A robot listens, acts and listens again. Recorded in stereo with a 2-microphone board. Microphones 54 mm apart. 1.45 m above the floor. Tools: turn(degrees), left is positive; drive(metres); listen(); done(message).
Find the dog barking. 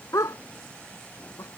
turn(degrees=90)
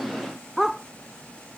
done("Facing the dog barking.")